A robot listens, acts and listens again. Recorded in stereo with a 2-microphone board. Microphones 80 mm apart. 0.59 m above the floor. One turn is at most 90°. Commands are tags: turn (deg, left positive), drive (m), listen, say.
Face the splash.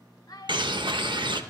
<listen/>
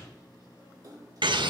<turn deg="-50"/>
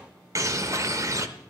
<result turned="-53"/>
<listen/>
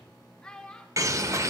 <say>I heard a splash, but can't make it out now. It was about straight ahead or 75° right.</say>